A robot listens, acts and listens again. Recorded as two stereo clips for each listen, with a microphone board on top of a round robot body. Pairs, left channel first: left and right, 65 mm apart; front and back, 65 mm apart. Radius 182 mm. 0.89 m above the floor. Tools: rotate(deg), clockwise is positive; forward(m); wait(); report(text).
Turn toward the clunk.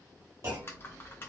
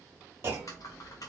rotate(130)
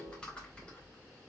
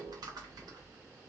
report("I heard a clunk from this way, but can't make it out now.")